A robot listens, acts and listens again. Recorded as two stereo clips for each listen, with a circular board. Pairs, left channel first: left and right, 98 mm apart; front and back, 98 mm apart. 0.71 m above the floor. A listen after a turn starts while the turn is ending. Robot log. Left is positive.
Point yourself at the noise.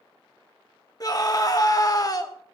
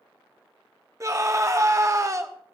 note: The scream: 130° left.
cmd yaw +130
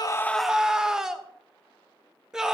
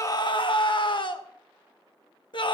end: Facing the scream, 1 to 2 m away.